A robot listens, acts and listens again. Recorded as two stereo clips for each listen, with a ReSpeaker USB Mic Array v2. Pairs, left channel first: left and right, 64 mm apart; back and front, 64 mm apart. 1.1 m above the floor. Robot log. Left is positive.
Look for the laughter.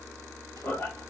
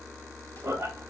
note: The laughter: 35° left.
cmd yaw +35
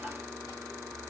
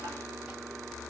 cmd idle
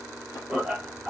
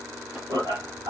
note: The laughter is now 10° right.
cmd yaw -10
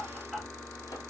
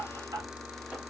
end: Found it: laughter, straight ahead.